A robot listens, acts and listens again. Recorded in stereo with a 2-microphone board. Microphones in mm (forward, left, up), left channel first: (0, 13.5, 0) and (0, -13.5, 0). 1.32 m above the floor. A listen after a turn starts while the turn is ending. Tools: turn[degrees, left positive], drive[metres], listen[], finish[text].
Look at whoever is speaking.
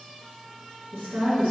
Thought: The woman speaking: about 70° right or 110° right.
Action: turn[-70]
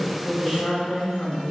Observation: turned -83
Thought: So it is at 40° left.
Action: turn[40]
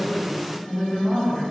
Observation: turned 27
Thought: The woman speaking is now 30° left.
Action: turn[30]
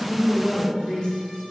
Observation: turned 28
Thought: The woman speaking is now 15° left.
Action: turn[15]
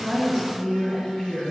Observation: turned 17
Action: finish[Found it: a woman speaking, straight ahead.]